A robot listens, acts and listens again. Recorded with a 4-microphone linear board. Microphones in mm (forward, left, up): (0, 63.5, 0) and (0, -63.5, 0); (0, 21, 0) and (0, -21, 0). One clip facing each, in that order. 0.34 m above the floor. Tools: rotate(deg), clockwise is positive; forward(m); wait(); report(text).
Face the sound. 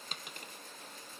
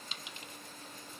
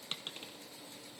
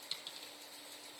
rotate(-50)
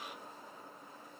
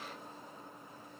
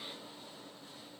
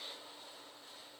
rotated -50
wait()
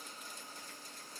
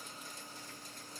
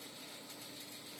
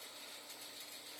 report("I heard a dropped coin, but can't make it out now. It was about straight ahead or 80° left.")